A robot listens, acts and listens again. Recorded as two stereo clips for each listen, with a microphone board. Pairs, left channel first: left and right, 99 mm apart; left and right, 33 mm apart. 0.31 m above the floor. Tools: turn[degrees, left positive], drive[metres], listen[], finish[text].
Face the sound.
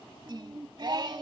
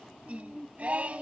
Thought: The singing: about 50° right or 130° right.
Action: turn[-50]
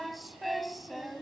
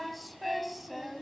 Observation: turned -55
Action: finish[Found it: singing, straight ahead, 1 to 2 m away.]